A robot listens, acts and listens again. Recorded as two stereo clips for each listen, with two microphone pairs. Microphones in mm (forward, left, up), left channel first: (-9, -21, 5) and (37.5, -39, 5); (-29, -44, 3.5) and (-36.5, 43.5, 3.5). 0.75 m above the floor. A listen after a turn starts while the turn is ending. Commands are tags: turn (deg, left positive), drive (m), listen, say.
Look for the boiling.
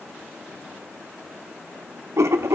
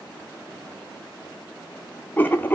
<listen/>
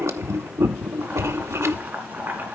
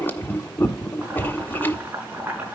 <turn deg="25"/>
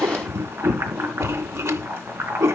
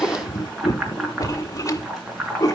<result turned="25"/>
<say>Found it: boiling, straight ahead.</say>